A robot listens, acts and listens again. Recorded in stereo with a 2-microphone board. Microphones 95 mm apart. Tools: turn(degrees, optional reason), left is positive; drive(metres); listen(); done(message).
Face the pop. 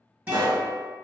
turn(degrees=-55, reason="The pop: about 55° right or 125° right.")
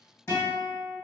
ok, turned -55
listen()
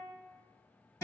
done("I heard a pop, but can't make it out now. It was about straight ahead or 70° right.")